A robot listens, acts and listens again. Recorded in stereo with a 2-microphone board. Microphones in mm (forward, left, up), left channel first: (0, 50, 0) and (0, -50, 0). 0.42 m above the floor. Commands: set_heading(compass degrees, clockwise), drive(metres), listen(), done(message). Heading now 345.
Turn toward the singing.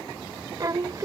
set_heading(20)
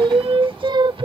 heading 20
set_heading(120)
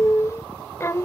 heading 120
set_heading(85)
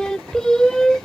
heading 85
done("Found it: singing, straight ahead.")